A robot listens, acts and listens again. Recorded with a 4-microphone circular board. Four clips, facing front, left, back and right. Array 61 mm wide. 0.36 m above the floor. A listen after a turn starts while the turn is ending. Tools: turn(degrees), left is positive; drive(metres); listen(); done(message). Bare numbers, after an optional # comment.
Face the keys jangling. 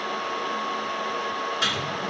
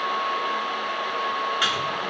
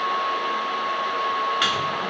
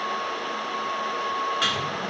listen()
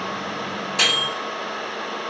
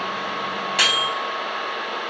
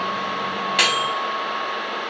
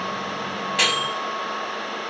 listen()
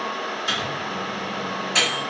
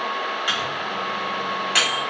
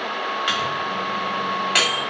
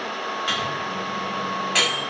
done("I can't make out keys jangling, only a microwave.")